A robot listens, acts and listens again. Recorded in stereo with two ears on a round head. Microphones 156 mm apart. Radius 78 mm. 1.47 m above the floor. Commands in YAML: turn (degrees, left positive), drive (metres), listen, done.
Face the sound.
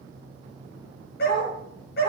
turn: 65
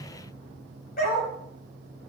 turn: 50
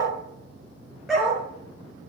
done: "Found it: a dog barking, straight ahead, over 4 m away."